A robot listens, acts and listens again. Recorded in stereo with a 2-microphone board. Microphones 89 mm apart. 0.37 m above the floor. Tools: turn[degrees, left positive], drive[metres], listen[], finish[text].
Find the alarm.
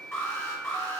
Thought: The alarm: about 30° left or 150° left.
Action: turn[30]
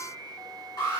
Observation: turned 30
Thought: So it is at 120° left.
Action: turn[120]
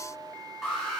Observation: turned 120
Action: finish[Found it: an alarm, straight ahead, 2 to 4 m away.]